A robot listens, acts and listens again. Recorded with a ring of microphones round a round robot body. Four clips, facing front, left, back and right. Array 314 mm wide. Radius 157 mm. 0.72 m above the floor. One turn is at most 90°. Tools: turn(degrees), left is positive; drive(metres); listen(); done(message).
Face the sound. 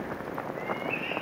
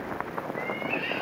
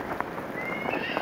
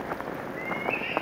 turn(degrees=90)
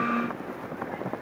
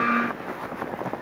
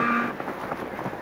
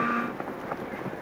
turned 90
turn(degrees=50)
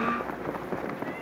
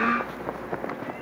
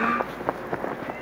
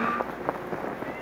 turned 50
listen()
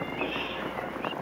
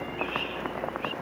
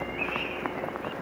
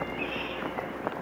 done("Found it: a cat meowing, straight ahead.")